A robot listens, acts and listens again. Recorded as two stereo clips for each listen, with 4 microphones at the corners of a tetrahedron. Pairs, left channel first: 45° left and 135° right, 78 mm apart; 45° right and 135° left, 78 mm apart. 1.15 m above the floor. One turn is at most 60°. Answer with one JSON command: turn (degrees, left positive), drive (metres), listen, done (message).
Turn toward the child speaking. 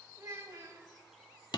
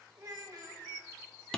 {"turn": 60}
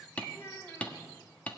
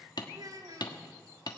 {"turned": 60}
{"turn": 60}
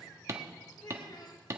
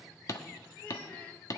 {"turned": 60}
{"turn": 40}
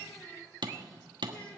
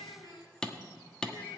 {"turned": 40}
{"listen": true}
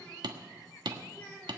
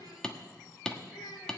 {"turn": -30}
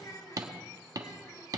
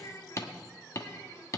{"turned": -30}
{"done": "Facing the child speaking, 2 to 4 m away."}